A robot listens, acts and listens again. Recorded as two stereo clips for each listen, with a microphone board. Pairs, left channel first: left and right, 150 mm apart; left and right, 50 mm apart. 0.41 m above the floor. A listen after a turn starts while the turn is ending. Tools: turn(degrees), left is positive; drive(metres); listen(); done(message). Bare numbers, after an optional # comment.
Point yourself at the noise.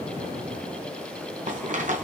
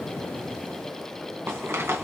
# The rattle: about 55° right or 125° right.
turn(-55)
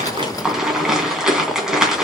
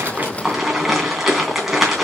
done("Found it: a rattle, straight ahead, 2 to 4 m away.")